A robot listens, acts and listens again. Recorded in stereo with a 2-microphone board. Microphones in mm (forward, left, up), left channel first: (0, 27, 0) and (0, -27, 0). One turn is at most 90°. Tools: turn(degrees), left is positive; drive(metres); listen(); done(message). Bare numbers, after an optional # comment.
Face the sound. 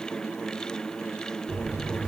turn(-30)
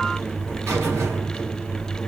# So it is at 135° right.
turn(-90)
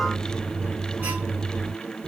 # The buzzer is now 35° right.
turn(-35)
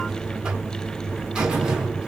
# The buzzer is now 15° right.
turn(-15)
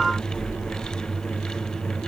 done("Found it: a buzzer, straight ahead, 1 to 2 m away.")